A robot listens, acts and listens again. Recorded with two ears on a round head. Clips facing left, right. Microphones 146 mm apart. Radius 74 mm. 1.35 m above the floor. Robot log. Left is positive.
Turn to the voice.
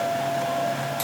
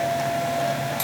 cmd idle
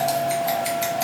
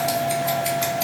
cmd idle
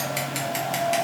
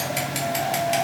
end: I can't make out anyone speaking to turn to.